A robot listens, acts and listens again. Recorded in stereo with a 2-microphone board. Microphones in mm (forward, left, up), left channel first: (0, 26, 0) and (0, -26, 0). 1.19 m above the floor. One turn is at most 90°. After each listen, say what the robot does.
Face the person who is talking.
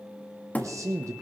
Turn 90° right.
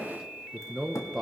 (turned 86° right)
Facing the man speaking, under 1 m away.